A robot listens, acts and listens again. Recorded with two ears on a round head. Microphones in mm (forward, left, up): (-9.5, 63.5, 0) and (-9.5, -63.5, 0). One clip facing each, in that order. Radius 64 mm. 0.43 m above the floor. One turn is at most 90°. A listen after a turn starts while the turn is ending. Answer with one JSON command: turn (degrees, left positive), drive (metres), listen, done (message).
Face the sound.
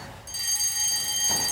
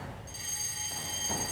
{"turn": 60}
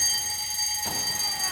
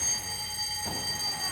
{"turn": 30}
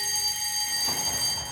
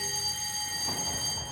{"turn": 20}
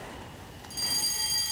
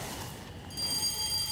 {"done": "Found it: a fire alarm, straight ahead, 2 to 4 m away."}